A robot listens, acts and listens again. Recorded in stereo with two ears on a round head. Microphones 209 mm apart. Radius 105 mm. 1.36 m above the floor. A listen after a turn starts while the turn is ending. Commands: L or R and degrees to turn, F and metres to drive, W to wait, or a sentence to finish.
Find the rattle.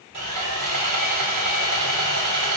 W
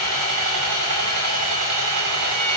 W
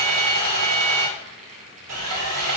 R35
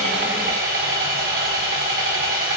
W
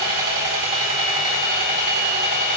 W
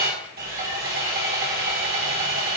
I heard a rattle, but can't make it out now. It was about straight ahead or 110° right.